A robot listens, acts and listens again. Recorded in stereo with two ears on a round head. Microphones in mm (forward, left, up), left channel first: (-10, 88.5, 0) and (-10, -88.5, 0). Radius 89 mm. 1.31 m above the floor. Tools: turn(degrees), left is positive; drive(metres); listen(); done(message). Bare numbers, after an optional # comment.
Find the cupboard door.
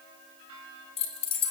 listen()
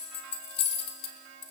listen()
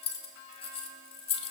done("I can't make out a cupboard door, only keys jangling.")